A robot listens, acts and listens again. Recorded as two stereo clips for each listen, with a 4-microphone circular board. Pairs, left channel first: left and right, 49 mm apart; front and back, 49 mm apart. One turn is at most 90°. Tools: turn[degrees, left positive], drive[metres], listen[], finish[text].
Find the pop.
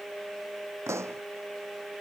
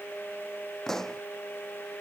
Thought: The pop: 80° right.
Action: turn[-80]
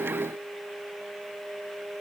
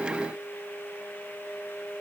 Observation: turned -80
Action: finish[I heard a pop from this way, but can't make it out now.]